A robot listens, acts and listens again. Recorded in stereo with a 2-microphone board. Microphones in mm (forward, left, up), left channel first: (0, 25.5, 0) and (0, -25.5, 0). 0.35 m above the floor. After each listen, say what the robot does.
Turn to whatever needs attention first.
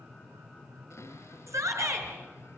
Turn 90° right.
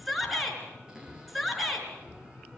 Found it: a shout, straight ahead.